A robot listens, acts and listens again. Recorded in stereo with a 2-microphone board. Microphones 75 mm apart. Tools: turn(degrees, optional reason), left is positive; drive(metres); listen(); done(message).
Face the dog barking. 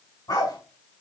turn(degrees=60, reason="The dog barking: about 60° left or 120° left.")
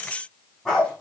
done("Found it: a dog barking, straight ahead.")